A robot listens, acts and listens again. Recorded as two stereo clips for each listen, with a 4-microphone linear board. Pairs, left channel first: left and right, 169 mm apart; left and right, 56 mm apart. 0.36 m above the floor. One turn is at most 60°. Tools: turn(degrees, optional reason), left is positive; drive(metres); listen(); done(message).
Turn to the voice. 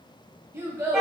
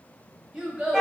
turn(degrees=-30)
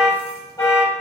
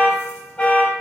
listen()
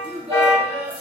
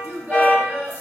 turn(degrees=-60, reason="So it is at 135° right.")
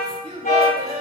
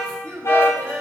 turn(degrees=-60, reason="The child speaking is now 90° right.")
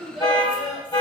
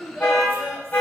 done("Found it: a child speaking, straight ahead, 1 to 2 m away.")